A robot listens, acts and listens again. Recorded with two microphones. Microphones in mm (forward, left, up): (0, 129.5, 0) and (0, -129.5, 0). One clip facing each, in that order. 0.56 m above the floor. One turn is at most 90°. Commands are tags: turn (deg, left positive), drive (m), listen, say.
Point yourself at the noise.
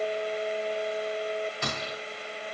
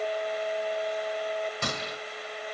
<turn deg="-55"/>
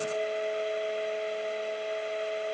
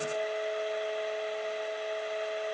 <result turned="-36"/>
<listen/>
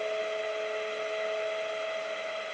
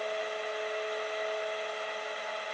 <say>I heard a gunshot, but can't make it out now. It was about 15° right or 90° right.</say>